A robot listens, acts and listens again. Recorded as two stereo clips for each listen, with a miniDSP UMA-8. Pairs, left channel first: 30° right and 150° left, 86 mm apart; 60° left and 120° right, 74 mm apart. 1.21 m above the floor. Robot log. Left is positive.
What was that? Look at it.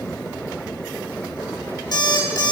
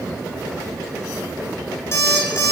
note: The alarm clock: 10° left.
cmd yaw +10
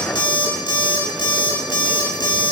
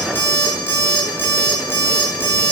end: Facing the alarm clock, 1 to 2 m away.